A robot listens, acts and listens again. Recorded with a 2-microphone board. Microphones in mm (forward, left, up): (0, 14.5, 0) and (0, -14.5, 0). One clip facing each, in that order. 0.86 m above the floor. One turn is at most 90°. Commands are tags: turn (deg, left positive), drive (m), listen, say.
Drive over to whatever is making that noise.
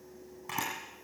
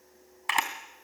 <turn deg="-90"/>
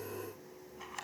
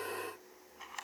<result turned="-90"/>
<drive m="1.0"/>
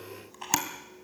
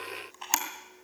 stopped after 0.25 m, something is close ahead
<say>Something is in my way. I am facing the camera shutter but have not reached it.</say>